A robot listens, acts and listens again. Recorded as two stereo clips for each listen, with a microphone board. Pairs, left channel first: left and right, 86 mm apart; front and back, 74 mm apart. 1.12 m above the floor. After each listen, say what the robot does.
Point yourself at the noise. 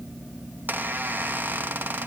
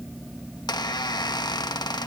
Turn 20° right.
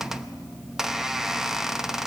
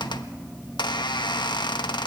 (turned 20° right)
Found it: a squeak, straight ahead, 1 to 2 m away.